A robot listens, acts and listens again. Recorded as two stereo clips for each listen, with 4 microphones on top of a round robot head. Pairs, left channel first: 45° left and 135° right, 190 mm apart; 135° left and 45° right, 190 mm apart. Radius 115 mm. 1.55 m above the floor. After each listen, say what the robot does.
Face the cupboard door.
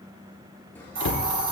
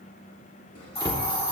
Turn 65° left.
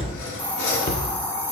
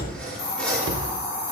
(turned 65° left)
Facing the cupboard door.